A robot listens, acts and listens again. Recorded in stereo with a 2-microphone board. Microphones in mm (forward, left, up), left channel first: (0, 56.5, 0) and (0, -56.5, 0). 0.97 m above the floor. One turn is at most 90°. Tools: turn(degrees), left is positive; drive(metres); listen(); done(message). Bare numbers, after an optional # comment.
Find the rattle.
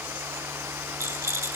# The rattle: about 25° right or 155° right.
turn(-25)
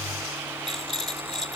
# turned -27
done("Facing the rattle, 2 to 4 m away.")